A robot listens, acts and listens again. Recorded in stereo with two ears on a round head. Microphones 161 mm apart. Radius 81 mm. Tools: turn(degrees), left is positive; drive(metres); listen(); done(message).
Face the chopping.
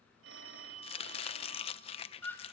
turn(degrees=35)
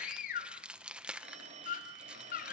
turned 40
done("Facing the chopping, under 1 m away.")